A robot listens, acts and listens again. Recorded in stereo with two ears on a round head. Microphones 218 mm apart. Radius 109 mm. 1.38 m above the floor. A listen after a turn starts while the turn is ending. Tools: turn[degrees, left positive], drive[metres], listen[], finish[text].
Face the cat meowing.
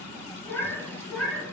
Action: turn[30]
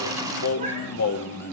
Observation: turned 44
Action: listen[]
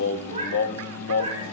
Thought: So it is at 30° right.
Action: turn[-30]
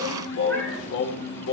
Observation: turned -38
Thought: Nothing new. It was at 10° left.
Action: turn[10]
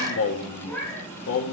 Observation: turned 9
Action: finish[Found it: a cat meowing, straight ahead, 2 to 4 m away.]